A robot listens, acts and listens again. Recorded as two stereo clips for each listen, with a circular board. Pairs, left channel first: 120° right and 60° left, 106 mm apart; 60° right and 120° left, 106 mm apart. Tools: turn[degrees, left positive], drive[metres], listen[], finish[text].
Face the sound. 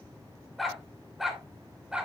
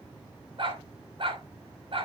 Thought: The dog barking: 140° left.
Action: turn[140]
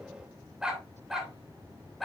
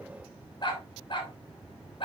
Thought: The dog barking is now 30° right.
Action: turn[-30]
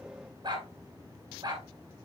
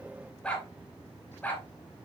Thought: The dog barking is now 15° left.
Action: turn[15]
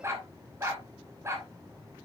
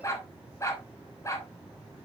Action: finish[Facing the dog barking.]